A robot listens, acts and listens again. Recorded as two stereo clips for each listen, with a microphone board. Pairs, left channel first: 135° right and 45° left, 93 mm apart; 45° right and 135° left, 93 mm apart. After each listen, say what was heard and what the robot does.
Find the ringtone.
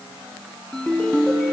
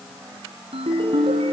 The ringtone: 140° left. Turn 140° left.
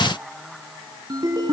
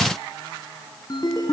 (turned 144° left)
Facing the ringtone, 2 to 4 m away.